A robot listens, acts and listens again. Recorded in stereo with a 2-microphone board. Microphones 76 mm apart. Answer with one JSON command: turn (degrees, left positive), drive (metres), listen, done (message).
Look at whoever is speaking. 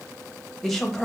{"turn": 30}
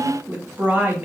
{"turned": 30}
{"turn": -25}
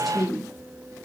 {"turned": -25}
{"done": "Found it: a woman speaking, straight ahead, 1 to 2 m away."}